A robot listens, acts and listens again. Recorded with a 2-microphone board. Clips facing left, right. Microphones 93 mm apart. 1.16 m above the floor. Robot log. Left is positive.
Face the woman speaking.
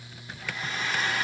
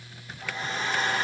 cmd idle
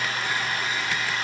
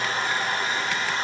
cmd idle
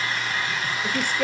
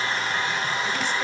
note: The woman speaking: about 55° left or 125° left.
cmd yaw +55
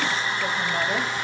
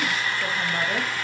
cmd idle
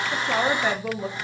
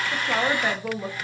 end: Found it: a woman speaking, straight ahead, 1 to 2 m away.